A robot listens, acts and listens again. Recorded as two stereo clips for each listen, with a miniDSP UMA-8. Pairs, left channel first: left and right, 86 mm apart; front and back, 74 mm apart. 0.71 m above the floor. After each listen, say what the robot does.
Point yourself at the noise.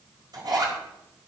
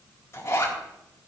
Turn 55° right.
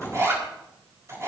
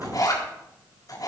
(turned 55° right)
Turn 35° right.
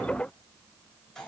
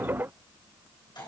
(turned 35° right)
Facing the zipper.